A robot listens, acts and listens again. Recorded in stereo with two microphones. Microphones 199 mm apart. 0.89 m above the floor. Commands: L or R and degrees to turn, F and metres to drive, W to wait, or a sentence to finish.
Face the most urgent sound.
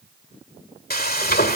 W
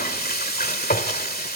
W
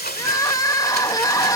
L15
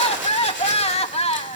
L150
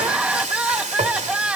Found it: crying, straight ahead.